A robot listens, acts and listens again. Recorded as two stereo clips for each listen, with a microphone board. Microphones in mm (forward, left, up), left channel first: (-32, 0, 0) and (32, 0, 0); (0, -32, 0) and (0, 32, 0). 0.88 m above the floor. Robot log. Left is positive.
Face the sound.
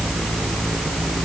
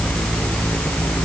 cmd idle
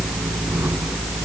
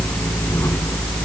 cmd idle
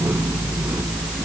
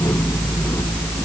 end: I can't make out anything to turn to.